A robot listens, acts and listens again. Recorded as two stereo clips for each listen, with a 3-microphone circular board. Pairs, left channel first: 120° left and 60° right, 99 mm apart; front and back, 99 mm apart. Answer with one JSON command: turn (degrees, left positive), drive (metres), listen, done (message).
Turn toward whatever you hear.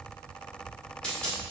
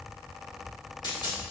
{"turn": 40}
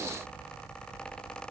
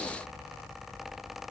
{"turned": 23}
{"turn": 15}
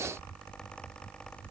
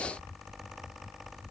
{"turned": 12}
{"done": "I heard a dropped coin from this way, but can't make it out now."}